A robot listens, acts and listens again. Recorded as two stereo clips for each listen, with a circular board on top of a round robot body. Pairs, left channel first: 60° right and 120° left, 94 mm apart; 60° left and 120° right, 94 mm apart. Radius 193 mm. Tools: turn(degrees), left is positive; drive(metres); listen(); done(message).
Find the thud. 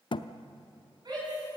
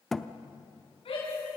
turn(degrees=-25)
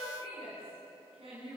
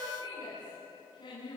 done("I heard a thud from this way, but can't make it out now.")